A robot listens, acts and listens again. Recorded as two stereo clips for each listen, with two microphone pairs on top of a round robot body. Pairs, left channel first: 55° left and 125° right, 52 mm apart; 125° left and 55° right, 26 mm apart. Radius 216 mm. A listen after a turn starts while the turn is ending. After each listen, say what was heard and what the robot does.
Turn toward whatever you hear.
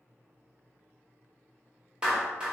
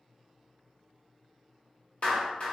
The clap: 165° left. Turn 165° left.
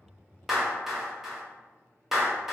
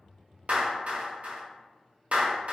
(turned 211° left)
The clap is now 45° right. Turn 45° right.
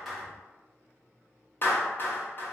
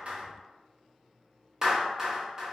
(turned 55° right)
The clap is now 10° left. Turn 10° left.
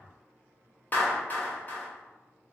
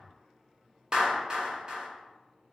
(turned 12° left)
Found it: a clap, straight ahead.